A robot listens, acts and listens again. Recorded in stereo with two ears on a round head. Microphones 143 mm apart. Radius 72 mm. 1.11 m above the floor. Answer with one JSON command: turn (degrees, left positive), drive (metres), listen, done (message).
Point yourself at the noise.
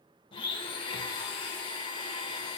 {"turn": 30}
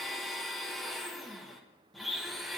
{"done": "Facing the blender, 1 to 2 m away."}